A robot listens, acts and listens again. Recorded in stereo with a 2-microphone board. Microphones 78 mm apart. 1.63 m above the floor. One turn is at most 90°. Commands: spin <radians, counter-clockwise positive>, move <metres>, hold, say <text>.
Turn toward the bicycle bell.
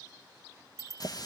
spin -0.70
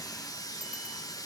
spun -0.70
hold
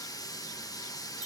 hold
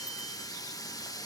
say I heard a bicycle bell, but can't make it out now. It was about straight ahead or 100° right.